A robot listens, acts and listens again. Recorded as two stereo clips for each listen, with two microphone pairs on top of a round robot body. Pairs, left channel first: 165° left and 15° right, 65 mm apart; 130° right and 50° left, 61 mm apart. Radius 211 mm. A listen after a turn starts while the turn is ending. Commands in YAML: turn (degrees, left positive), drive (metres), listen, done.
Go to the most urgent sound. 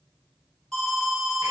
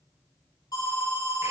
turn: -115
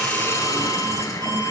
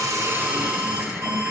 listen: true
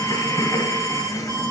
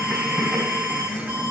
drive: 1.0
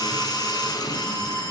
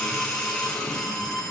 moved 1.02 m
turn: 10
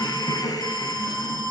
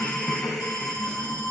drive: 1.0
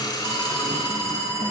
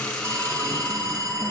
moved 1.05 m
turn: 10
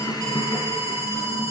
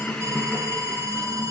drive: 1.0
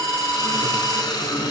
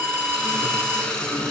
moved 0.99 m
drive: 1.0
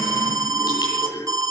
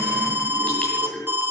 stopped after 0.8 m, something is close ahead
done: "I am next to the alarm."